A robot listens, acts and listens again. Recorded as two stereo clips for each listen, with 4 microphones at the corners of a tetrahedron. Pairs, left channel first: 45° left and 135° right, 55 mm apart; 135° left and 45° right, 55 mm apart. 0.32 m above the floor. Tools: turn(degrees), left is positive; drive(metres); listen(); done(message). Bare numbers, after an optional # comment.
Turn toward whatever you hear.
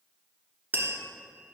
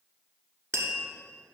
# The tapping: 80° right.
turn(-80)
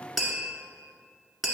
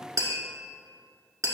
# The tapping is now 50° right.
turn(-50)
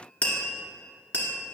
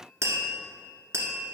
# The tapping is now 20° right.
turn(-20)
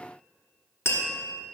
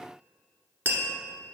done("Found it: tapping, straight ahead, 1 to 2 m away.")